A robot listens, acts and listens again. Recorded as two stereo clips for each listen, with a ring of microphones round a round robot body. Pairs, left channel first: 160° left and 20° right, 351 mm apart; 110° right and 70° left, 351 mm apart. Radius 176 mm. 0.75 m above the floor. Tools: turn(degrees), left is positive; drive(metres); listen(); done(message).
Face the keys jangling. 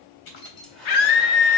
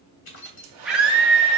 turn(degrees=-170)
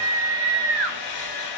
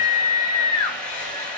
listen()
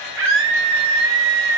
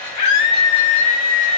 listen()
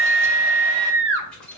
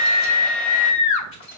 turn(degrees=-115)
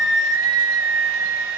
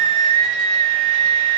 listen()
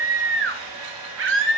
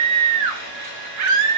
listen()
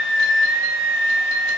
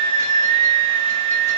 done("Facing where the keys jangling came from. I can't hear it now.")